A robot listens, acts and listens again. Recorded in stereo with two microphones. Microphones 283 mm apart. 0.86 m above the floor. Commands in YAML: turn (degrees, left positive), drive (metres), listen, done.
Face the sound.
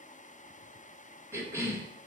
turn: -30
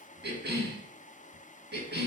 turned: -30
turn: -140
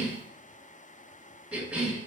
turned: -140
done: "Found it: a cough, straight ahead, 1 to 2 m away."